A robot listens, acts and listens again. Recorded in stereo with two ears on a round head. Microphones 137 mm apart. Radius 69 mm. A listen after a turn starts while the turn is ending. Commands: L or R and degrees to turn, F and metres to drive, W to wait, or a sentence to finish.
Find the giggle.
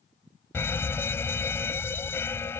W
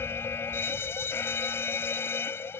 W
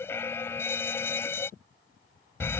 I can't make out a giggle, only a fire alarm.